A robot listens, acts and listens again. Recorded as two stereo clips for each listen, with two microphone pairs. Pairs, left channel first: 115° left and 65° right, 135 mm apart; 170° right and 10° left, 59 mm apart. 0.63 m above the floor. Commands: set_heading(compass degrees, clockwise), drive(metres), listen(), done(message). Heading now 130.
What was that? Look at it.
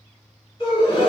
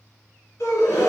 set_heading(325)
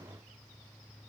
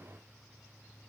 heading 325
done("I heard a gasp from this way, but can't make it out now.")